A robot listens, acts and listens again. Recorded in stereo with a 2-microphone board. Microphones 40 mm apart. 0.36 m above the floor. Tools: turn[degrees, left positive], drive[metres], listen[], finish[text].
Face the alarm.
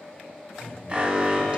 Thought: The alarm: about 25° right or 155° right.
Action: turn[-25]
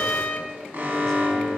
Thought: So it is at 130° right.
Action: turn[-130]
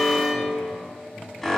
Thought: The alarm is now 10° left.
Action: turn[10]
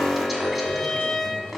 Action: finish[Facing the alarm, 1 to 2 m away.]